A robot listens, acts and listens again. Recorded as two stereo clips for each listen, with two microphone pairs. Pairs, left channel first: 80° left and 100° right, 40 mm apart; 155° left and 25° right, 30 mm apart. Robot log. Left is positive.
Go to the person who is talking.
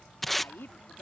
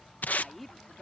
note: The woman speaking: 65° left.
cmd yaw +65
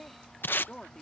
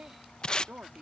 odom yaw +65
cmd fwd 1.0
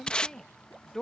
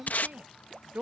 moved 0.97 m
cmd fwd 1.0
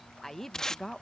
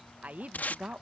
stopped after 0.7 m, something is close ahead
end: Arrived at the woman speaking, straight ahead.